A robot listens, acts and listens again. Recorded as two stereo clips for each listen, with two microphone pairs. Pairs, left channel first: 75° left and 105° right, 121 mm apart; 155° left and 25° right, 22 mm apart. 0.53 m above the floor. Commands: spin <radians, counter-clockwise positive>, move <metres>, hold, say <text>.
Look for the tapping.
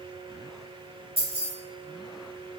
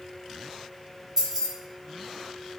hold
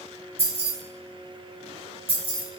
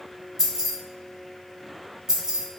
hold
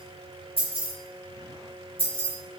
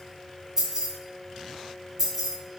say I can't make out tapping, only keys jangling.